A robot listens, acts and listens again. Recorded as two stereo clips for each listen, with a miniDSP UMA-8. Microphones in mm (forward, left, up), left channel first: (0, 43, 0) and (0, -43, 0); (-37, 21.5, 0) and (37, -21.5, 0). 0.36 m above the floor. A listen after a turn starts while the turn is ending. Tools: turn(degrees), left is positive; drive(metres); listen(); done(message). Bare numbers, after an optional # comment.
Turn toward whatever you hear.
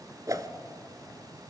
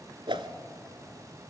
# The whoosh: 45° right.
turn(-45)
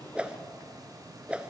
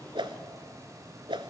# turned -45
# The whoosh is now 15° right.
turn(-15)
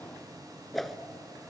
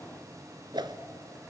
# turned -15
done("Facing the whoosh, 1 to 2 m away.")